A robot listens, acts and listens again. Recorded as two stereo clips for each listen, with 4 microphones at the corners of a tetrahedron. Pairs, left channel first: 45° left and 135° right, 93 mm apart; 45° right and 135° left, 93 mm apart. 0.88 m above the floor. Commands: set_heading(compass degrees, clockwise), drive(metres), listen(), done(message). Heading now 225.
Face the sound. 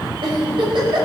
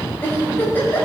set_heading(335)
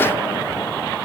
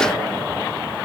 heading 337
listen()
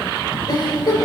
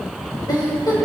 done("Facing the giggle, over 4 m away.")